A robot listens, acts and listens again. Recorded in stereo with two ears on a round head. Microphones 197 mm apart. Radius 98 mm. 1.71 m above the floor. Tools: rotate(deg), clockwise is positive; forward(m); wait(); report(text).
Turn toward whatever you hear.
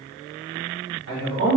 rotate(65)
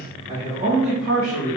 rotate(35)
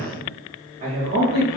rotate(40)
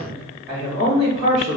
rotate(15)
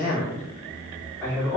report("Facing the man speaking, 1 to 2 m away.")